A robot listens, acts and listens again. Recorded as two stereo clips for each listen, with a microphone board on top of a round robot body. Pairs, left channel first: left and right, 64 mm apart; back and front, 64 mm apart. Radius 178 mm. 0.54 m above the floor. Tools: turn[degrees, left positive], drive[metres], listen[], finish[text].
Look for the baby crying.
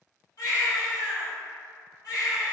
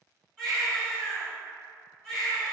Thought: The baby crying: 100° left.
Action: turn[100]
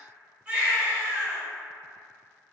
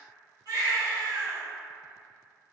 Thought: The baby crying is now 20° right.
Action: turn[-20]
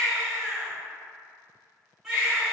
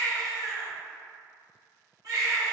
Action: finish[Found it: a baby crying, straight ahead.]